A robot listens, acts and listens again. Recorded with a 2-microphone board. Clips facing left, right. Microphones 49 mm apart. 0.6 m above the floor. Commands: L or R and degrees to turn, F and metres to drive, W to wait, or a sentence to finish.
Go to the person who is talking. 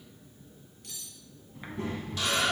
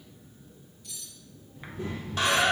L90
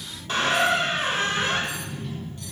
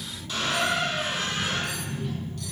R10
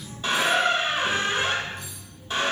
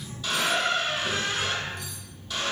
F1.0
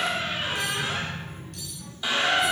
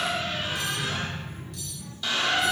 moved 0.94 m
F1.0
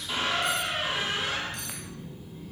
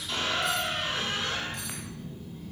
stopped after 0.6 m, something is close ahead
L10
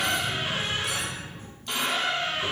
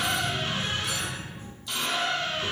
I am next to the child speaking.